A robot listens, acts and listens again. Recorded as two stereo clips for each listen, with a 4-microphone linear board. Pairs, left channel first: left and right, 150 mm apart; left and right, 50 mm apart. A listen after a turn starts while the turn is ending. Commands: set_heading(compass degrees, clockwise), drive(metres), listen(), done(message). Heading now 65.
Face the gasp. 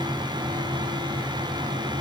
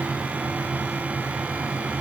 listen()
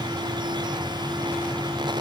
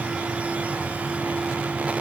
listen()
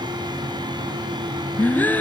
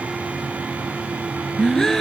set_heading(35)
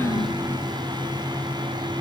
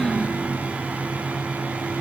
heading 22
listen()
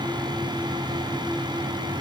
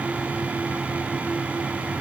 done("I heard a gasp, but can't make it out now. It was about 30° right or 125° left.")